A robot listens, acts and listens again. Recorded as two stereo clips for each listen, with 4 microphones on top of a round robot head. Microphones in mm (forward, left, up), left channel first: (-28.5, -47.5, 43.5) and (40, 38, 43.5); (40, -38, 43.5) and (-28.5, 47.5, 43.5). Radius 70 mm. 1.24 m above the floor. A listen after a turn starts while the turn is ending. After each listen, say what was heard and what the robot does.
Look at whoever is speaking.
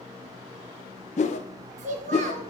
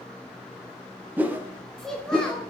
The child speaking: 35° left. Turn 35° left.
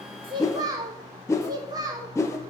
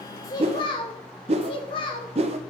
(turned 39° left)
Found it: a child speaking, straight ahead, under 1 m away.